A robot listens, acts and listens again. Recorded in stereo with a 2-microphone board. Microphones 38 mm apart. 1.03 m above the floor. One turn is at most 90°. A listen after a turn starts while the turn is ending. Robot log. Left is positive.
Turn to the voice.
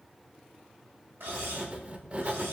cmd idle
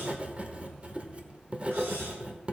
cmd idle
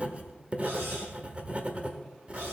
end: I can't make out anyone speaking, only writing.